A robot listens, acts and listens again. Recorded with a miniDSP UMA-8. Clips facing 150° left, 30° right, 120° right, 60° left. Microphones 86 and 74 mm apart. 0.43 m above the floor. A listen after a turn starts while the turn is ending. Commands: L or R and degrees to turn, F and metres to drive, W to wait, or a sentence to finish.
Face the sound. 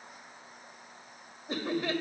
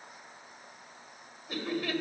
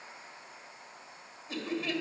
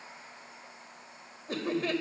L95
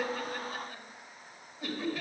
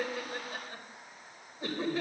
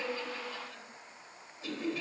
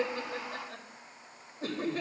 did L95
L25
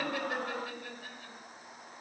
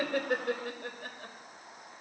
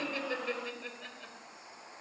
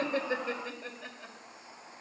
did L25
R15
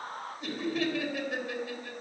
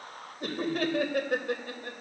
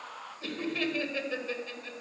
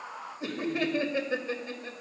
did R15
Facing the laughter.